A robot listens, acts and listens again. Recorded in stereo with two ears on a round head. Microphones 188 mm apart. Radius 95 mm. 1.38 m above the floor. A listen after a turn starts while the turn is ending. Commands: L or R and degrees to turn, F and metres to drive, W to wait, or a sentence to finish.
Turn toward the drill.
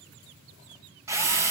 R30
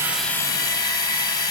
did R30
L20
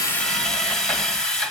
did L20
Found it: a drill, straight ahead, 1 to 2 m away.